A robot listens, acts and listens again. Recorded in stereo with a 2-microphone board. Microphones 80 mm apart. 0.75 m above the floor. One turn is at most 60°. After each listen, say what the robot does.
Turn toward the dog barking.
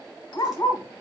Turn 45° left.
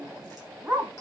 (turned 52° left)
Turn 20° right.
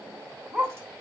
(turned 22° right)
Turn 10° right.
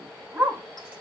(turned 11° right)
Turn 15° right.
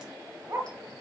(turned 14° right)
Turn 20° right.
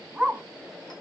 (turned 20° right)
Found it: a dog barking, straight ahead, 1 to 2 m away.